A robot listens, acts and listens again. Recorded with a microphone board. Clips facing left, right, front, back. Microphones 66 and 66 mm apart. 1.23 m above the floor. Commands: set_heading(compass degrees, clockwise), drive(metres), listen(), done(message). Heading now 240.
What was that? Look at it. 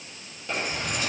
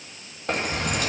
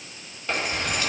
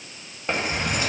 set_heading(355)
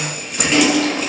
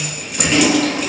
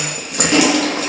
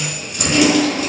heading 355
done("Found it: keys jangling, straight ahead.")